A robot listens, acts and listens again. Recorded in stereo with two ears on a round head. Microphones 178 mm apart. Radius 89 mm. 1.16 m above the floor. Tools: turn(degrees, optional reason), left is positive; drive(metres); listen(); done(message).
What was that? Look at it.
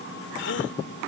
turn(degrees=60, reason="The gasp: about 60° left or 120° left.")
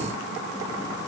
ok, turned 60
listen()
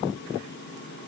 done("I heard a gasp, but can't make it out now. It was about straight ahead or 60° left.")